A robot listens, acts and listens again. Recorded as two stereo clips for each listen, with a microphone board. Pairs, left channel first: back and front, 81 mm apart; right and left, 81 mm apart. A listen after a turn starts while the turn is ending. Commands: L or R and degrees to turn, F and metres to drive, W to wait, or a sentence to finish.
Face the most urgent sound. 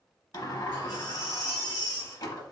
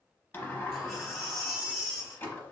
L175
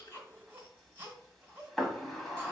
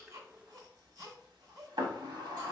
L60
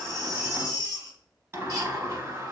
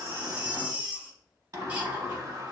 L20
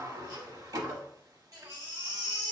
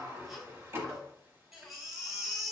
Facing the baby crying.